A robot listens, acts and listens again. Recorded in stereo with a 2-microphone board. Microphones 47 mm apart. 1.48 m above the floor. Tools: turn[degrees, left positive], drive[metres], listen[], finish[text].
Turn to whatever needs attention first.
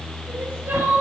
Thought: The crying: about 40° right or 140° right.
Action: turn[-40]
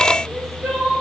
Action: finish[Found it: crying, straight ahead, over 4 m away.]